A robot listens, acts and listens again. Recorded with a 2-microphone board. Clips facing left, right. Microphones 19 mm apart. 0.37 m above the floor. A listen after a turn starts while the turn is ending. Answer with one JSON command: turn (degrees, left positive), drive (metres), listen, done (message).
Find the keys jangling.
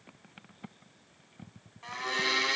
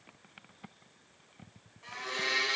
{"listen": true}
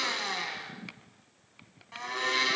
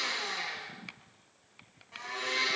{"listen": true}
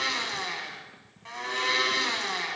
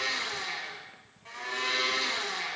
{"done": "I can't make out keys jangling to turn to."}